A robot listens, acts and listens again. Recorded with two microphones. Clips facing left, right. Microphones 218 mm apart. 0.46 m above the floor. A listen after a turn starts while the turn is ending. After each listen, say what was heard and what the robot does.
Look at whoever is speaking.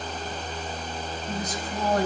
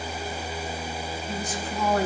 The woman speaking: about 40° left or 140° left. Turn 40° left.
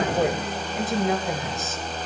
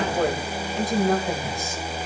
Found it: a woman speaking, straight ahead.